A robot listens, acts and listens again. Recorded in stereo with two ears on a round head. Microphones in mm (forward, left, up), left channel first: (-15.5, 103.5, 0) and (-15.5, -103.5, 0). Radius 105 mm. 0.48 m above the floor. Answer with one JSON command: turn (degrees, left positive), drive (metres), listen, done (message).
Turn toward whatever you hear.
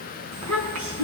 {"turn": -75}
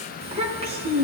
{"turn": -25}
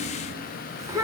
{"turn": -15}
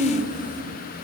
{"done": "Facing the child speaking."}